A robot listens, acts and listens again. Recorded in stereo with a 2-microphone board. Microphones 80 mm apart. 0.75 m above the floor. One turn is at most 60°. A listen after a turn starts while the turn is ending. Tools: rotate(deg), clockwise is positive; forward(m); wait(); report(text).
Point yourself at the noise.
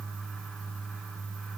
wait()
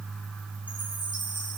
wait()
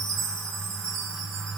rotate(-60)
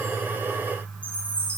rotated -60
rotate(-20)
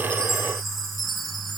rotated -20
report("Facing the chime, over 4 m away.")